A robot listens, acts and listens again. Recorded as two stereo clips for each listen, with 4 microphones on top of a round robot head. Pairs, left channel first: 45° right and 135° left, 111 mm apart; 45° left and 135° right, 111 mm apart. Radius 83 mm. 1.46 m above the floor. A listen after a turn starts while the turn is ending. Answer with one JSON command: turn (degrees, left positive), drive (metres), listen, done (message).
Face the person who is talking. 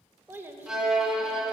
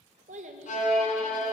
{"turn": -155}
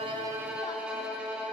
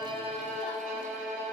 {"listen": true}
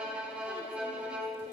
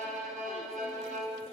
{"listen": true}
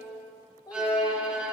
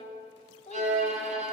{"turn": 10}
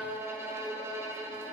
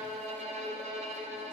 {"listen": true}
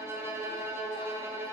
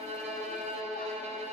{"listen": true}
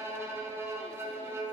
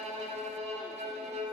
{"done": "Facing where the child speaking came from. I can't hear it now."}